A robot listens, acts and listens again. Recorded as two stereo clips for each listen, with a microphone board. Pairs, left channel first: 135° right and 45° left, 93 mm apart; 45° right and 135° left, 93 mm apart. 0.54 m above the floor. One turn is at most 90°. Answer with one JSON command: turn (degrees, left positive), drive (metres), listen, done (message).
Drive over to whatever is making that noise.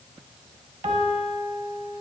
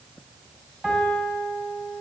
{"turn": 55}
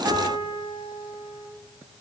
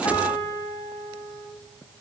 {"drive": 1.0}
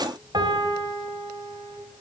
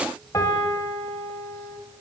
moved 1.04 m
{"drive": 1.0}
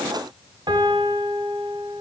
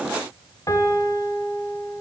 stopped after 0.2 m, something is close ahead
{"done": "Arrived at the piano, straight ahead."}